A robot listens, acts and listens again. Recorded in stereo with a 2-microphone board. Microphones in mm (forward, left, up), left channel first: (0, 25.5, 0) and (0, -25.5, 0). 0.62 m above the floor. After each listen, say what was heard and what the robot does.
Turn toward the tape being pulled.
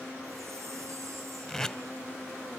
Turn 30° left.
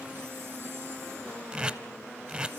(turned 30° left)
So it is at 20° right. Turn 20° right.
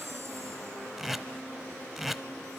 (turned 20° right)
Facing the tape being pulled.